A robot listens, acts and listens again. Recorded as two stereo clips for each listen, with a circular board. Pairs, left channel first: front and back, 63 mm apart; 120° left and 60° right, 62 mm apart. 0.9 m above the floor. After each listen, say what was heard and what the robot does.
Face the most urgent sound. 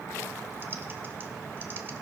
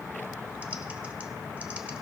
Keep listening.
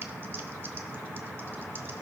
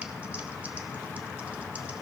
Keep listening.
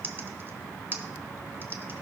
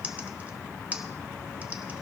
I can't make out anything urgent, only typing on a keyboard.